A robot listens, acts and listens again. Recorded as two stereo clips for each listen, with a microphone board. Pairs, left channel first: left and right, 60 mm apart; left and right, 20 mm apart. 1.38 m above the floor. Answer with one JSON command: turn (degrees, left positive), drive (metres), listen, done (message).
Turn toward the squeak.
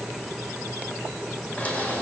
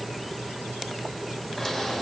{"turn": 25}
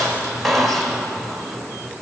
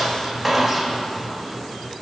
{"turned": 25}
{"done": "Found it: a squeak, straight ahead."}